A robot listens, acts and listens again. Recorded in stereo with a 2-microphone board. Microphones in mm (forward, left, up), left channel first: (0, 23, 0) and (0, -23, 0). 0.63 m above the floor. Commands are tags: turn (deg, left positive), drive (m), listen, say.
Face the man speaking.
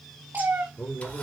<turn deg="55"/>
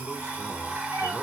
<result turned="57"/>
<listen/>
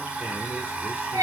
<listen/>
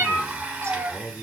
<turn deg="50"/>
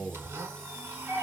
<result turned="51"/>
<say>Found it: a man speaking, straight ahead, 1 to 2 m away.</say>